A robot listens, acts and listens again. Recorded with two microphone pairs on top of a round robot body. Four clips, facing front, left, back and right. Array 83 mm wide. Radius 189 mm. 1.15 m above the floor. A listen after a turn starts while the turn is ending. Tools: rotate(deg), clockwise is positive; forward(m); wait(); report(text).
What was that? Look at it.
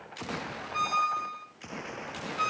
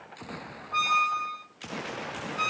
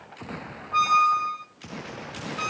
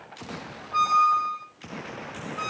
rotate(-125)
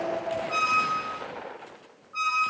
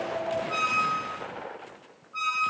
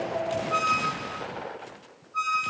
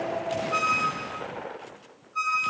rotate(-30)
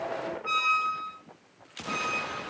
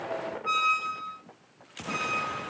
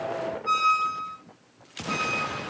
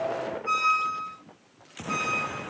report("Facing the squeak.")